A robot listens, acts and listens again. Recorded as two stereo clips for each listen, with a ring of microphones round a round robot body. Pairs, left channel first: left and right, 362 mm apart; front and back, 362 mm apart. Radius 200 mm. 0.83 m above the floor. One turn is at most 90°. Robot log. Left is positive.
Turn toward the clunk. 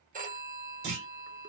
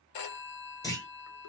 note: The clunk: 80° right.
cmd yaw -80
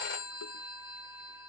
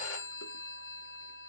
end: Facing where the clunk came from. I can't hear it now.